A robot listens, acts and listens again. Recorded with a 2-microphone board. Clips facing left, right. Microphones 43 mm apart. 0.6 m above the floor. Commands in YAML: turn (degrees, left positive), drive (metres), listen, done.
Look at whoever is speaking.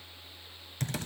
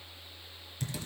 listen: true
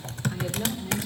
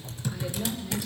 turn: 45
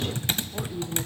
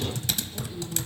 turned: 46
turn: 75
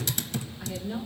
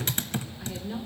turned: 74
done: "Facing the woman speaking, 1 to 2 m away."